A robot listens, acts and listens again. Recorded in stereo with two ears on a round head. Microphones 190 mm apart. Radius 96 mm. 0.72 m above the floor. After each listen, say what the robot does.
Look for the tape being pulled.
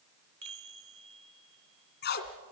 Turn 55° left.
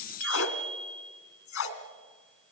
Turn 70° left.
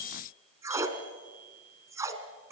Turn 15° right.
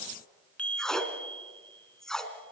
Facing the tape being pulled.